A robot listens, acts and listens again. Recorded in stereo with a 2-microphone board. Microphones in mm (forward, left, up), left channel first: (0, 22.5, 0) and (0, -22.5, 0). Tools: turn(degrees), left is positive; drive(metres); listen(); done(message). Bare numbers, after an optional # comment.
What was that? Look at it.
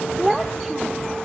turn(30)
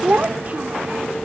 # So it is at 35° right.
turn(-35)
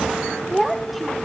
done("Found it: a child speaking, straight ahead.")